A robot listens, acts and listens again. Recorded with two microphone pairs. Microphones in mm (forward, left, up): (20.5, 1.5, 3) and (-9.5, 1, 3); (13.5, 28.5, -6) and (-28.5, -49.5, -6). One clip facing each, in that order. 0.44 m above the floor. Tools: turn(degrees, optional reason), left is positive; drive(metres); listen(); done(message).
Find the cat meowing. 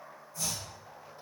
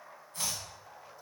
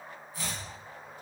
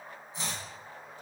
listen()
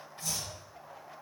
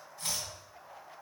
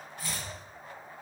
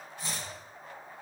listen()
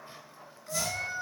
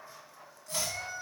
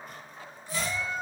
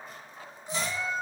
turn(degrees=-50, reason="The cat meowing: 50° right.")
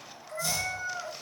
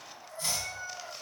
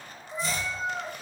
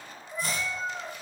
done("Facing the cat meowing, 1 to 2 m away.")